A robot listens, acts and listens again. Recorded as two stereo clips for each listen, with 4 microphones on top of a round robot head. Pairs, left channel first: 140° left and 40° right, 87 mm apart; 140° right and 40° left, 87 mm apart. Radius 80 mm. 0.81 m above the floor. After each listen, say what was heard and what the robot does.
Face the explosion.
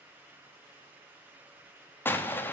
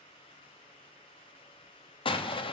The explosion: 155° right. Turn 155° right.
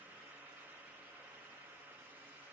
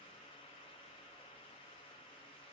I heard an explosion from this way, but can't make it out now.